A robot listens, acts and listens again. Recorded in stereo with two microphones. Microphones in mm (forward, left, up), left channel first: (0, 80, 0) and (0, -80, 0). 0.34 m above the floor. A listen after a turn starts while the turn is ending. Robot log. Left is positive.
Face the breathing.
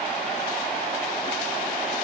cmd idle
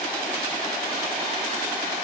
cmd idle
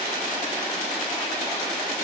end: I can't make out breathing.